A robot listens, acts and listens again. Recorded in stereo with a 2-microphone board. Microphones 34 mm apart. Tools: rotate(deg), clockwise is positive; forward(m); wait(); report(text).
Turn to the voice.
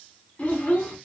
rotate(-30)
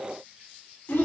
rotate(-115)
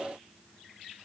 wait()
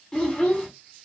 rotate(-30)
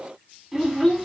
report("Facing the child speaking, 2 to 4 m away.")